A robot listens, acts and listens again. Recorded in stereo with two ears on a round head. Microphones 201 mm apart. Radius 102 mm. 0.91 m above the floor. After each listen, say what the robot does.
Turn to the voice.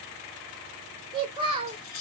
Turn 25° right.
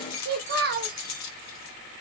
Turn 135° right.
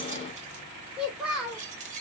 Found it: a child speaking, straight ahead, 1 to 2 m away.